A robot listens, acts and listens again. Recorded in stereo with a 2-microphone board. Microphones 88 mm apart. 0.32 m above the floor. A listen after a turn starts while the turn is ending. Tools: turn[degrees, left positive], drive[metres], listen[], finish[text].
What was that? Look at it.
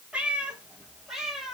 Action: turn[30]
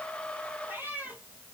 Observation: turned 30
Thought: So it is at 20° right.
Action: turn[-20]
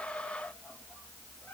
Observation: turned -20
Thought: The cat meowing is now 10° left.
Action: turn[10]
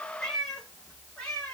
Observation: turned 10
Thought: The cat meowing is now 10° left.
Action: turn[10]
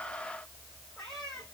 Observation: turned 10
Action: finish[Found it: a cat meowing, straight ahead.]